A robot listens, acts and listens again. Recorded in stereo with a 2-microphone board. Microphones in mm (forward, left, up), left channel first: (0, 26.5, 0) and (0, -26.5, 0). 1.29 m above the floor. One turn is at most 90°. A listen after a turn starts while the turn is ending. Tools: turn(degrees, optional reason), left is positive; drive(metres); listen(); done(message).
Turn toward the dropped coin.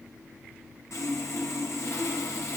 listen()
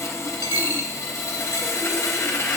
turn(degrees=70, reason="The dropped coin: about 70° left or 110° left.")
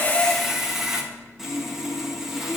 listen()
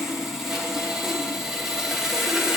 done("I heard a dropped coin, but can't make it out now. It was about straight ahead or 40° left.")